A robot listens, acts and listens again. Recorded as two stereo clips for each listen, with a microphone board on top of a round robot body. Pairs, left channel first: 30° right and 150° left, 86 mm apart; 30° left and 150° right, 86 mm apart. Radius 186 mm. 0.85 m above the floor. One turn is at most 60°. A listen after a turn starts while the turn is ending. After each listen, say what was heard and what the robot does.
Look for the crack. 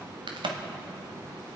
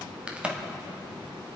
The crack: 135° left. Turn 60° left.
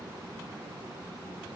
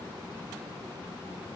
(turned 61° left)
Nothing new. It was at 70° left. Turn 60° left.
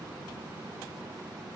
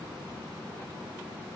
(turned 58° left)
Nothing new. It was at 15° left. Turn 15° left.
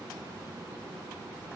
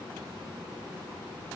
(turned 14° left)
I heard a crack from this way, but can't make it out now.